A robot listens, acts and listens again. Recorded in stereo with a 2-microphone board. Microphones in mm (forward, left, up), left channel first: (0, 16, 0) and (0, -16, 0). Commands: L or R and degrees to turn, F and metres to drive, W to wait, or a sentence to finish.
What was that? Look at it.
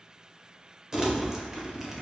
R20
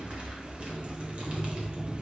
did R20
R140
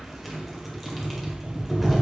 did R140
Found it: crumpling, straight ahead, 1 to 2 m away.